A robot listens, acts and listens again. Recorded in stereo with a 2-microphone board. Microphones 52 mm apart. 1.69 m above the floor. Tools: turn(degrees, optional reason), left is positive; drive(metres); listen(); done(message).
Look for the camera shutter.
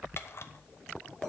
turn(degrees=55, reason="The camera shutter: about 55° left or 125° left.")
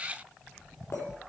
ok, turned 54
listen()
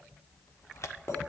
turn(degrees=70, reason="So it is at 70° left.")
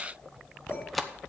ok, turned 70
done("Facing the camera shutter, under 1 m away.")